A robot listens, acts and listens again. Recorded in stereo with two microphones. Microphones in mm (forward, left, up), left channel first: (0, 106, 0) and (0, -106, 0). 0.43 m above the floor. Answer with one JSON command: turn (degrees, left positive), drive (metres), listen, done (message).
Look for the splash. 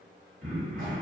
{"listen": true}
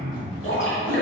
{"turn": 75}
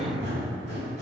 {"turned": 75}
{"listen": true}
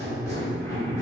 {"done": "I heard a splash, but can't make it out now. It was about straight ahead or 30° left."}